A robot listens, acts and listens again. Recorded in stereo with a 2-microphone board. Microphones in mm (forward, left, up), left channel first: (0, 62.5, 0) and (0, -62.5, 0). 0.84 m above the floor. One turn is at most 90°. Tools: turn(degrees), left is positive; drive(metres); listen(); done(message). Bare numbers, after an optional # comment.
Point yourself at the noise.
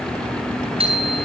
# The bicycle bell: about 50° right or 130° right.
turn(-50)
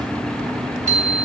# So it is at 80° right.
turn(-80)
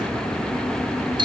# The bicycle bell is now 40° right.
turn(-40)
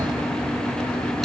listen()
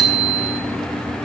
done("Facing the bicycle bell.")